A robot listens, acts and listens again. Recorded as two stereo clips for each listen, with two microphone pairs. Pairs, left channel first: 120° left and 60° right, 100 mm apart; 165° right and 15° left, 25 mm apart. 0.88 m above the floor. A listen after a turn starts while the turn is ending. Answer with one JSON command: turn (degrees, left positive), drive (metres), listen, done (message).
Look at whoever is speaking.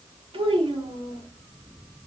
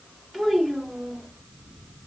{"turn": -80}
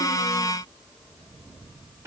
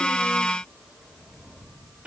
{"done": "Facing the child speaking."}